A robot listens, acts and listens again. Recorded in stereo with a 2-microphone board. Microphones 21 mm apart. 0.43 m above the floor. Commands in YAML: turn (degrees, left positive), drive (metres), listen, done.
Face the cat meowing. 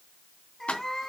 turn: 30
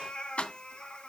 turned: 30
turn: 130
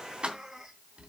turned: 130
turn: -20
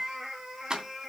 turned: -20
done: "Found it: a cat meowing, straight ahead."